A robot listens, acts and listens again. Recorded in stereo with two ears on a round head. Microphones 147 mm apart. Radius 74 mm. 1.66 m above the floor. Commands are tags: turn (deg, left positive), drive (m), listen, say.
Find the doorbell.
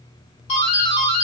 <turn deg="40"/>
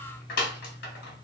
<turn deg="100"/>
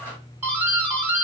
<turn deg="-15"/>
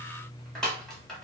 <say>Found it: a doorbell, straight ahead, 1 to 2 m away.</say>